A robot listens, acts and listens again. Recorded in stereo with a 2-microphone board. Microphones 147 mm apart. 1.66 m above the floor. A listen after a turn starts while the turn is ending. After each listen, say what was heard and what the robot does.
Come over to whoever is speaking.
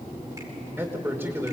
Turn 30° right.
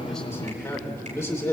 So it is at 20° left. Turn 20° left.
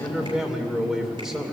Drive 1.0 m forward.
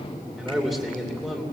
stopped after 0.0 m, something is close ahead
Blocked. The man speaking is further on, straight ahead.